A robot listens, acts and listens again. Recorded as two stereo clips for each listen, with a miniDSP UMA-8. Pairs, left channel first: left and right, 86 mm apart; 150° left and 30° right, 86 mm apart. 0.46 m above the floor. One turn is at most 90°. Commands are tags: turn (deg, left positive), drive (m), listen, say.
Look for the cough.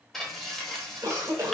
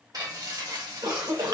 <turn deg="-50"/>
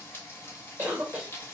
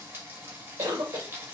<turn deg="-20"/>
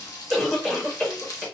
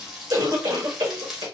<say>Facing the cough, 1 to 2 m away.</say>